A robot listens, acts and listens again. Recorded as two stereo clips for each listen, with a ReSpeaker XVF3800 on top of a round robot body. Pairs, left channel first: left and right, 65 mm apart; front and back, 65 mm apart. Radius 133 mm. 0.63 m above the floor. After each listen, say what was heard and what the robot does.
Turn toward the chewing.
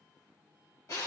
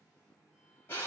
Keep listening.
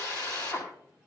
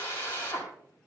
Keep listening.
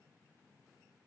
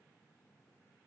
I can't make out chewing to turn to.